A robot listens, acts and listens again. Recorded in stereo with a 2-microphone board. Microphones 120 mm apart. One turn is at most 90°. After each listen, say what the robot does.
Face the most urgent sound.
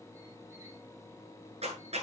Keep listening.
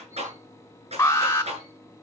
Turn 20° left.
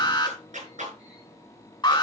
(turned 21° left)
Turn 90° left.
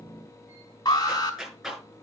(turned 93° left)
Turn 45° left.
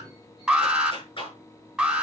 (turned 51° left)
Found it: an alarm, straight ahead, 2 to 4 m away.